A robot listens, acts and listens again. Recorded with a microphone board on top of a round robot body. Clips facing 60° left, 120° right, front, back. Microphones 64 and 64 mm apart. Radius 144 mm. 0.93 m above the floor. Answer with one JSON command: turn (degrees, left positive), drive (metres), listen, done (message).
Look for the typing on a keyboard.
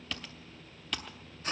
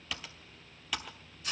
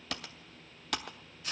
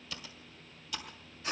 {"turn": -35}
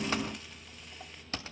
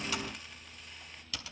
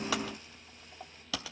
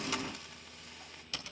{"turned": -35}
{"done": "Found it: typing on a keyboard, straight ahead."}